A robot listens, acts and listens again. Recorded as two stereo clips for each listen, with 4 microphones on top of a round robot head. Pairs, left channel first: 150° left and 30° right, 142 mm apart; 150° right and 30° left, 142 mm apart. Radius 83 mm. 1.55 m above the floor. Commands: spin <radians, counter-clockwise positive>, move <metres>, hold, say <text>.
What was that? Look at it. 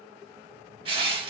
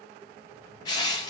spin -1.48
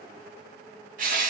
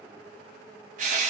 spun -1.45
say Found it: crushing, straight ahead.